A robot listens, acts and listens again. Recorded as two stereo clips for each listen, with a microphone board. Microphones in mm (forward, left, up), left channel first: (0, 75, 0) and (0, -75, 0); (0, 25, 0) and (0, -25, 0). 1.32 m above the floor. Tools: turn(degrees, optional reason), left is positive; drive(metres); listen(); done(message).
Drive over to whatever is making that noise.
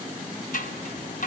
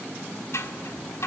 turn(degrees=65, reason="The scissors: about 65° left or 115° left.")
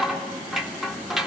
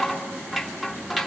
drive(metres=1.0)
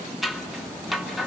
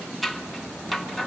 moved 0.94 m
drive(metres=1.0)
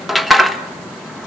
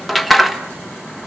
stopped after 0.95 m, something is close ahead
done("I am next to the scissors.")